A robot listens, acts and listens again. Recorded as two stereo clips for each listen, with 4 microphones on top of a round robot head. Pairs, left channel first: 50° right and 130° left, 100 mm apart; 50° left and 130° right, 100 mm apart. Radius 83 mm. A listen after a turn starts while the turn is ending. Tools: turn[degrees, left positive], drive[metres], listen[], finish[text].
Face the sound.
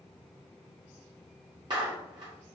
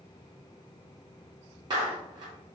Thought: The clap: straight behind.
Action: turn[180]
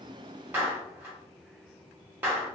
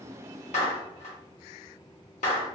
Thought: The clap is now 55° left.
Action: turn[55]
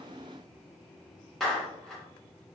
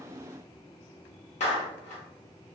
Thought: The clap is now 35° left.
Action: turn[35]
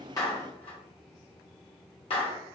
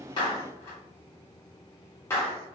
Thought: The clap is now 15° right.
Action: turn[-15]
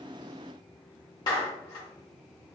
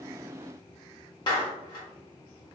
Action: finish[Facing the clap, 1 to 2 m away.]